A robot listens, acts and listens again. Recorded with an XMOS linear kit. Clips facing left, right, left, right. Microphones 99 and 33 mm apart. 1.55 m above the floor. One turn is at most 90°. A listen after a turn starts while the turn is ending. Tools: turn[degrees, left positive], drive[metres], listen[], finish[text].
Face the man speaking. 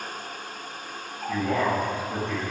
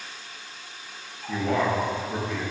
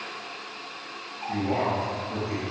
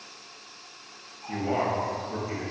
Thought: The man speaking: about 25° right or 155° right.
Action: turn[-25]
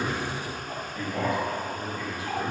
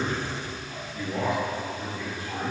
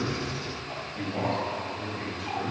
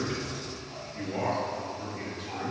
Thought: So it is at 130° right.
Action: turn[-90]
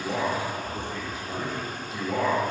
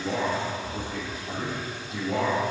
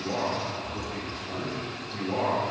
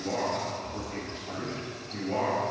Thought: The man speaking is now 55° right.
Action: turn[-55]
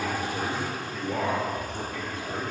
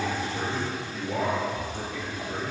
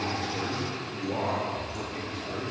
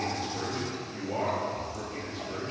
Action: finish[Found it: a man speaking, straight ahead.]